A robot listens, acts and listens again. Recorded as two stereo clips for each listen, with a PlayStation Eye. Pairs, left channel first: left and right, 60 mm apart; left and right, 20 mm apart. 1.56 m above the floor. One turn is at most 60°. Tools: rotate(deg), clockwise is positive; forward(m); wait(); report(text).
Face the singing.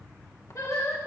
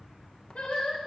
rotate(-60)
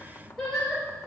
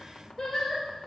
rotate(-10)
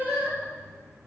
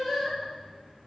report("Found it: singing, straight ahead.")